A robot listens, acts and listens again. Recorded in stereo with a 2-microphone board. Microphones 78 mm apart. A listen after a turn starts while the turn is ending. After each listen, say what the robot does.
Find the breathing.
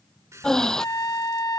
Turn 30° left.
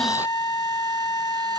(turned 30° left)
Keep listening.
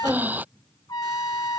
Turn 20° right.
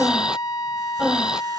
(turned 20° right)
Turn 10° right.
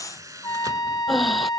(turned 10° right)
Facing the breathing.